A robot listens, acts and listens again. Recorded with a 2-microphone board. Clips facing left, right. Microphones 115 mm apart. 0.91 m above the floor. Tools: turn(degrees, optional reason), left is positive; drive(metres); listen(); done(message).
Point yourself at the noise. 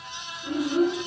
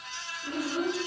turn(degrees=30)
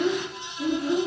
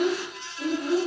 turn(degrees=-50, reason="So it is at 50° right.")
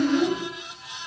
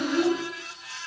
done("Found it: a child speaking, straight ahead.")